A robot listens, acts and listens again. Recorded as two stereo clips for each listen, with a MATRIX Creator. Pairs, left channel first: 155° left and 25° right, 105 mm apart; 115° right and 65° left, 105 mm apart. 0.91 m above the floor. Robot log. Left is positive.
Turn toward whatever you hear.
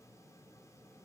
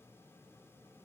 cmd idle
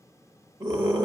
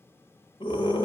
note: The scream: 70° right.
cmd yaw -70
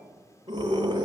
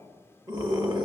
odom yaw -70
note: The scream is now 25° left.
cmd yaw +25
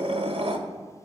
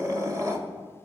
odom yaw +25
note: The scream is now 10° left.
cmd yaw +10
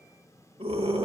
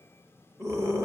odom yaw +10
end: Found it: a scream, straight ahead, 1 to 2 m away.